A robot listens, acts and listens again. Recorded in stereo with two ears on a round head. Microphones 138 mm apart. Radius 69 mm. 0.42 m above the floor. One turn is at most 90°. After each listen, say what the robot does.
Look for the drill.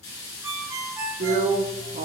Turn 55° right.
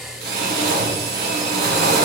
Turn 70° right.
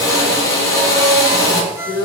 Turn 20° left.
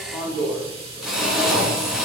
Facing the drill.